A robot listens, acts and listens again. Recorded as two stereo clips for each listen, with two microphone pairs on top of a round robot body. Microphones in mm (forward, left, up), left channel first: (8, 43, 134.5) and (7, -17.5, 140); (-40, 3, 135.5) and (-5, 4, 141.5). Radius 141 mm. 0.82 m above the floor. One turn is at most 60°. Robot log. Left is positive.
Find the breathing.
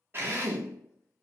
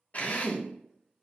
cmd idle
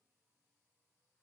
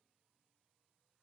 cmd idle
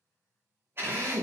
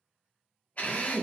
end: I can't make out breathing to turn to.